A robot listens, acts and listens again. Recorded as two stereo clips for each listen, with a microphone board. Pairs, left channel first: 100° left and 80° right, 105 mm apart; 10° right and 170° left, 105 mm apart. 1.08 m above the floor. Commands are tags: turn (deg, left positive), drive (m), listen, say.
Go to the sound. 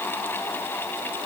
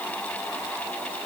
<listen/>
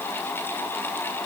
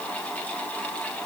<listen/>
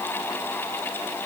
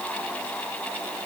<say>I can't make out anything.</say>